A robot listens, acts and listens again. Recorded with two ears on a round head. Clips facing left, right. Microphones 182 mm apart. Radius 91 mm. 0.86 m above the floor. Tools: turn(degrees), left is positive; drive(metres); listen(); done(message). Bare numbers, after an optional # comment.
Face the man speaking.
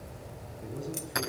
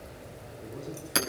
turn(30)
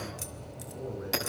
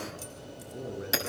# So it is at 30° right.
turn(-30)
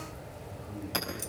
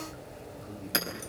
# The man speaking is now 20° right.
turn(-20)
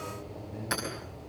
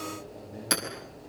done("Facing the man speaking, over 4 m away.")